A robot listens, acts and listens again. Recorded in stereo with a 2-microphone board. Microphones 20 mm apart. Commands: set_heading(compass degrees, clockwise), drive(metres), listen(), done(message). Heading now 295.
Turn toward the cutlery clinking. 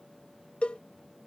listen()
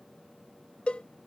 listen()
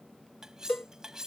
set_heading(325)
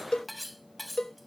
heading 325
done("Found it: cutlery clinking, straight ahead.")